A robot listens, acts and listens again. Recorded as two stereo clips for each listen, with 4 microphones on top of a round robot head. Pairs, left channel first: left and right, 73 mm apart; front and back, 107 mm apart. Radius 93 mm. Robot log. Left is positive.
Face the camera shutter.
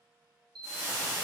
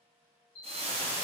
note: The camera shutter: 80° right.
cmd yaw -80
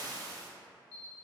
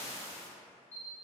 note: The camera shutter is now 15° left.
cmd yaw +15
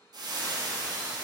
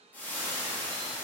cmd idle
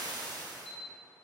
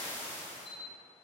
end: Found it: a camera shutter, straight ahead, 1 to 2 m away.